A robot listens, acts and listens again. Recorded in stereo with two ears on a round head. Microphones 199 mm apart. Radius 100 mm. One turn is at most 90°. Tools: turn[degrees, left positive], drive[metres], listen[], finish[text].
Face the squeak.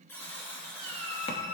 Thought: The squeak: about 65° right or 115° right.
Action: turn[-65]
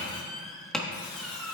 Action: finish[Facing the squeak.]